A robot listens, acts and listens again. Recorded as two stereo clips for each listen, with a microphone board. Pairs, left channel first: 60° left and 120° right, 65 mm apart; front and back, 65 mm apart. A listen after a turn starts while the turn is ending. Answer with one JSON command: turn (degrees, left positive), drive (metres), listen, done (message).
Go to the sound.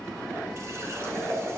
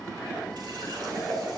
{"turn": -165}
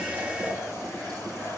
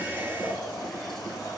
{"listen": true}
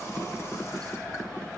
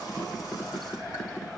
{"listen": true}
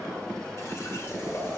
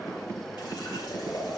{"turn": 15}
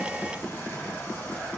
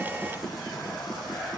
{"listen": true}
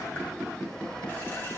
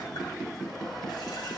{"listen": true}
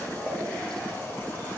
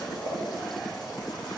{"drive": 1.0}
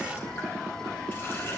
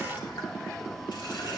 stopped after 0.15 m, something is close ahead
{"listen": true}
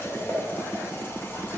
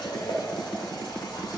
{"done": "Blocked. The running tap is further on, straight ahead."}